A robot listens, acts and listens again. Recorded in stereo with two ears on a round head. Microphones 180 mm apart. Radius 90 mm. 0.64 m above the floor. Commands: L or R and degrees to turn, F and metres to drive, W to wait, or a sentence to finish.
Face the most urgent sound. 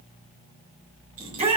R30
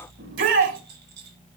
R115
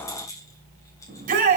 R45
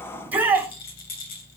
R10
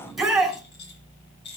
Facing the shout, over 4 m away.